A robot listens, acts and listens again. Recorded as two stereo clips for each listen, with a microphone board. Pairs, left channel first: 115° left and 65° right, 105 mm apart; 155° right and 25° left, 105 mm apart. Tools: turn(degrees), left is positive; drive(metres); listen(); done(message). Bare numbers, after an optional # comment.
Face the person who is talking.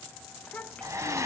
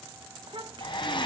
# The child speaking: 35° left.
turn(35)
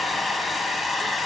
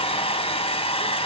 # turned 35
listen()
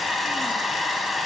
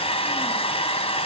listen()
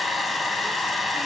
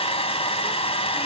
done("Facing where the child speaking came from. I can't hear it now.")